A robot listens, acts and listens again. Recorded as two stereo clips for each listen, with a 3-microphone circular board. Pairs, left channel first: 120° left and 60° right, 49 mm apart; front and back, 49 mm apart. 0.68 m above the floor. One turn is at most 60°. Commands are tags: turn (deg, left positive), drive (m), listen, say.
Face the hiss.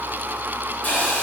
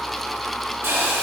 <turn deg="60"/>
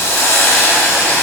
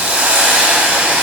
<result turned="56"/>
<turn deg="60"/>
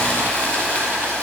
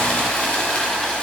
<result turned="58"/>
<turn deg="55"/>
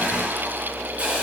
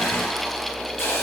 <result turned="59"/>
<say>Found it: a hiss, straight ahead.</say>